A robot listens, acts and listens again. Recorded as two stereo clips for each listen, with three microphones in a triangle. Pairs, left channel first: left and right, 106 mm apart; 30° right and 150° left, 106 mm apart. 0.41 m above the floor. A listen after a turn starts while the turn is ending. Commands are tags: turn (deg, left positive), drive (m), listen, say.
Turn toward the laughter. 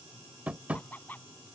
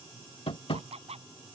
<turn deg="165"/>
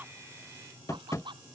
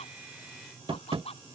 <turn deg="-50"/>
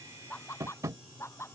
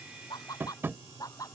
<turn deg="25"/>
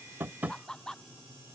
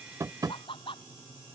<say>Facing the laughter.</say>